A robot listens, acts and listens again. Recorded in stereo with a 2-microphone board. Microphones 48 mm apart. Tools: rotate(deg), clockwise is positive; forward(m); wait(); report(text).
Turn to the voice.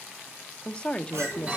rotate(-25)
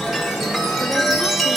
wait()
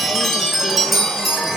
wait()
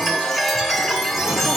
report("I heard a woman speaking, but can't make it out now. It was about straight ahead or 130° left.")